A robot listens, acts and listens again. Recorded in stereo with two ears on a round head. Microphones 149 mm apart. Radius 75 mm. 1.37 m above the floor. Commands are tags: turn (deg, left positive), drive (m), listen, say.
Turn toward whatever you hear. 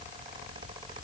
<listen/>
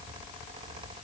<listen/>
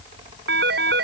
<turn deg="-70"/>
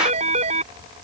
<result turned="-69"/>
<turn deg="-40"/>
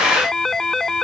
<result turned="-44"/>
<say>Found it: a phone ringing, straight ahead.</say>